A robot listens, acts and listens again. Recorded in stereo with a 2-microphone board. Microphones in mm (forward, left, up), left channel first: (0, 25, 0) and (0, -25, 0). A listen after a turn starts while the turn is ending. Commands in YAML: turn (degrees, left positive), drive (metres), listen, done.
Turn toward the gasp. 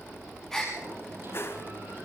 turn: 30
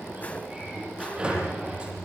listen: true
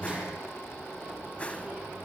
done: "I heard a gasp, but can't make it out now. It was about 25° right or 145° left."